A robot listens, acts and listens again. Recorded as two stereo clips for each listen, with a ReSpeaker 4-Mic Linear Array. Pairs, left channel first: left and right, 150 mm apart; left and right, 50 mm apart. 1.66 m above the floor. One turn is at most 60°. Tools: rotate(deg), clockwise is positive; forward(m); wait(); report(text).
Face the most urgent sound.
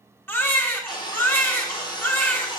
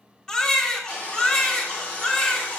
rotate(-30)
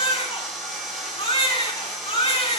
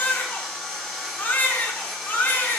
rotate(-60)
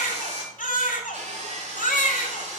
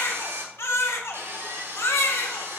rotate(-60)
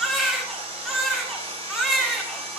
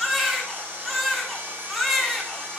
report("Facing the baby crying.")